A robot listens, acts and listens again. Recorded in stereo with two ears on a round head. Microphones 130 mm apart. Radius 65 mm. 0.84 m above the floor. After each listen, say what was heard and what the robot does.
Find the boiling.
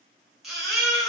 Keep listening.
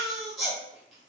Keep listening.
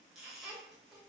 I can't make out boiling, only a baby crying.